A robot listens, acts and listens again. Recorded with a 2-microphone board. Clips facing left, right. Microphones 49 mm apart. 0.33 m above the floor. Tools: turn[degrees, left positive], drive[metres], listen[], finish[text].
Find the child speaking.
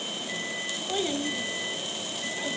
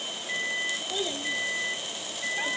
Thought: The child speaking: about 50° left or 130° left.
Action: turn[50]
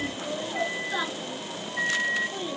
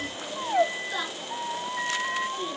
Thought: So it is at 15° left.
Action: turn[15]
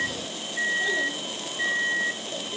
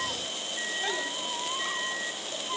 Action: listen[]
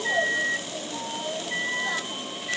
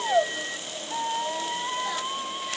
Action: listen[]
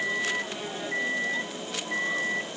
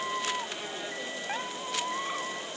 Action: finish[Facing where the child speaking came from. I can't hear it now.]